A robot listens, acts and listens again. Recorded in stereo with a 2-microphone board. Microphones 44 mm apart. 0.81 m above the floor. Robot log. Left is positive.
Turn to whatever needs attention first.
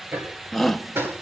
cmd yaw +30
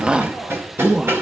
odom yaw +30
note: So it is at 25° right.
cmd yaw -25
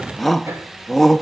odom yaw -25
end: Facing the shout, under 1 m away.